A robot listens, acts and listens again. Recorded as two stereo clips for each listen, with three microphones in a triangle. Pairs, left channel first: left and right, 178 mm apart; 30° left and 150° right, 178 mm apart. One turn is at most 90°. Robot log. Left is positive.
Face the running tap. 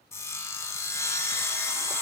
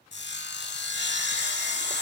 cmd idle
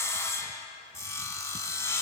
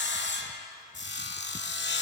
cmd idle
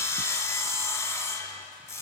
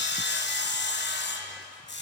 end: I can't make out a running tap to turn to.